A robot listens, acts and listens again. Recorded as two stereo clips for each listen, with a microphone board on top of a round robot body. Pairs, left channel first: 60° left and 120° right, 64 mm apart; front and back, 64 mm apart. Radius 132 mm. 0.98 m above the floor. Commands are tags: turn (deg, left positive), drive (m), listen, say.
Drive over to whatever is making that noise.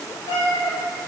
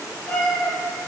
<turn deg="60"/>
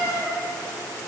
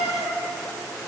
<turn deg="20"/>
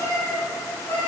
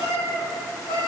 <drive m="1.0"/>
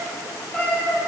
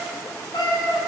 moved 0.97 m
<turn deg="-15"/>
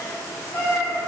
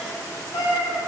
<drive m="1.0"/>
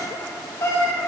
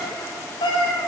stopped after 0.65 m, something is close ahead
<say>Arrived at the cat meowing, straight ahead.</say>